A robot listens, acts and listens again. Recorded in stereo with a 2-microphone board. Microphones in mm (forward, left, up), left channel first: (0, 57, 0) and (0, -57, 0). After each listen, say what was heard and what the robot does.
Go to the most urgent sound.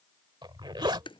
Keep listening.
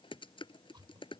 Keep listening.
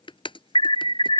The alarm: about 55° left or 125° left. Turn 55° left.
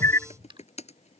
So it is at 30° left. Turn 30° left.
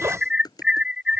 Drive 1.0 m forward.
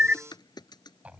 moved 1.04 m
The alarm is now 20° right. Turn 20° right.
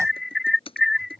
Drive 1.0 m forward.
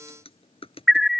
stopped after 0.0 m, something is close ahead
I am next to the alarm.